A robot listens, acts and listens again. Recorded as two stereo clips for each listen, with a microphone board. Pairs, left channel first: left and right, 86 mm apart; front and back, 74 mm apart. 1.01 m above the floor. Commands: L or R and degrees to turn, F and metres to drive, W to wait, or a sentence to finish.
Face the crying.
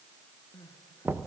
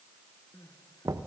L45
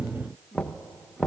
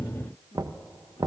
Facing the crying, 1 to 2 m away.